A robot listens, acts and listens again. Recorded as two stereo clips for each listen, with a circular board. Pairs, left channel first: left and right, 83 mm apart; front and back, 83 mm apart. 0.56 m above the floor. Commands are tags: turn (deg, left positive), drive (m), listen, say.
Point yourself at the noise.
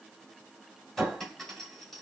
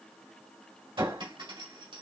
<turn deg="175"/>
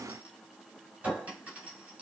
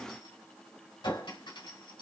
<turn deg="-15"/>
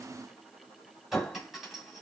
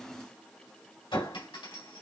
<say>Found it: a clink, straight ahead, 2 to 4 m away.</say>